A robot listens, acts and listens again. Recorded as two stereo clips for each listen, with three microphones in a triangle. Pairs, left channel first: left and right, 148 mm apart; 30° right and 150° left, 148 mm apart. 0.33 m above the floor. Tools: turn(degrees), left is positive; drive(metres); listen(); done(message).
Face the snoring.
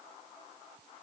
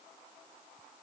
listen()
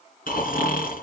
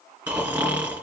turn(degrees=70)
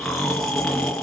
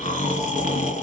done("Facing the snoring, 2 to 4 m away.")